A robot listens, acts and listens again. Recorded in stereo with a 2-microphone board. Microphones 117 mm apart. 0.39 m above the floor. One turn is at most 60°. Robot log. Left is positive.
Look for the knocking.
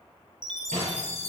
cmd yaw -60
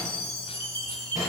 note: So it is at 35° right.
cmd yaw -35
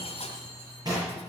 note: The knocking is now 35° right.
cmd yaw -35
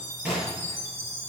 note: The knocking is now 10° right.
cmd yaw -10
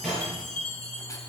end: Facing the knocking.